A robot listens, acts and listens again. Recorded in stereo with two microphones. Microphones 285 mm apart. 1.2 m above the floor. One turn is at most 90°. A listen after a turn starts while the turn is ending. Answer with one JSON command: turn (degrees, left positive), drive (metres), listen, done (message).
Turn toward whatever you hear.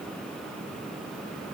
{"listen": true}
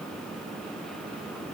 {"listen": true}
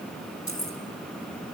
{"turn": 70}
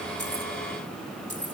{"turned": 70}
{"turn": 40}
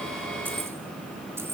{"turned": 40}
{"turn": -10}
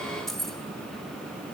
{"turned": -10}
{"done": "Facing the keys jangling."}